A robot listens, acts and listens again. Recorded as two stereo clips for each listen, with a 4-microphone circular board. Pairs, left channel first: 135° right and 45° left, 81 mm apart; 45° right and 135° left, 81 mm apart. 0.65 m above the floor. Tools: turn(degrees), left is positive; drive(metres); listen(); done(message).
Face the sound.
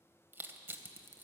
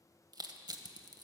turn(degrees=105)
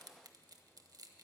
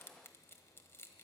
turn(degrees=15)
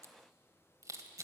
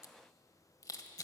done("Found it: crushing, straight ahead, under 1 m away.")